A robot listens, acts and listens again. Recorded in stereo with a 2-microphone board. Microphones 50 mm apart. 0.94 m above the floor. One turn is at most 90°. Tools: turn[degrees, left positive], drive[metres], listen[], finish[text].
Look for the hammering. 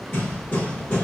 Thought: The hammering: about 45° left or 135° left.
Action: turn[45]
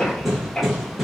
Action: finish[Found it: hammering, straight ahead, 1 to 2 m away.]